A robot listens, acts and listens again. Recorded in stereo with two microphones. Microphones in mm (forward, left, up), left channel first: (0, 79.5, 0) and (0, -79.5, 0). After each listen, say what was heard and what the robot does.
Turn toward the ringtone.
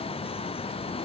Keep listening.
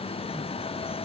Keep listening.
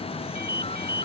Turn 90° right.
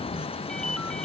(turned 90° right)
Facing the ringtone.